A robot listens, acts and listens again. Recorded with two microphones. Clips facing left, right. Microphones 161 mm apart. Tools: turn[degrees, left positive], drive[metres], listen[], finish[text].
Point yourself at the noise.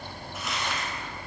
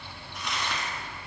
Action: turn[30]
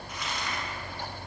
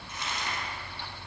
Thought: So it is at 25° right.
Action: turn[-25]
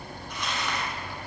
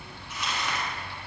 Action: finish[Found it: crumpling, straight ahead.]